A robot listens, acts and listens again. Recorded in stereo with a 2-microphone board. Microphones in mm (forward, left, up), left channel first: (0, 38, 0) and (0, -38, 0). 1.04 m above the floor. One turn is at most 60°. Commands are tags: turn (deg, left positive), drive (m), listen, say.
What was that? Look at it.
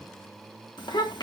<turn deg="60"/>
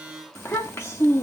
<turn deg="35"/>
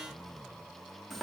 <say>Found it: a child speaking, straight ahead, 1 to 2 m away.</say>